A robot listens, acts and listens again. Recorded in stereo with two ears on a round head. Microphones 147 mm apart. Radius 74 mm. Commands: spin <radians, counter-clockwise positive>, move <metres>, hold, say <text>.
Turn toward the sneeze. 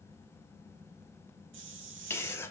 spin 0.26
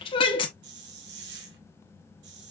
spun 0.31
spin 2.62
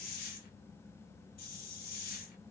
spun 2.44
spin 0.17
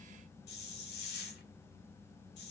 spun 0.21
say Facing where the sneeze came from. I can't hear it now.